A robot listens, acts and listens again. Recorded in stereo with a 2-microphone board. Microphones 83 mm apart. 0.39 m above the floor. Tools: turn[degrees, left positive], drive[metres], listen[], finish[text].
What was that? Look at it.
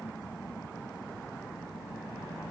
Action: listen[]
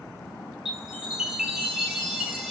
Action: turn[-30]
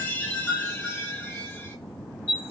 Thought: So it is at 20° left.
Action: turn[20]
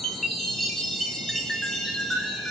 Action: finish[Facing the chime, 1 to 2 m away.]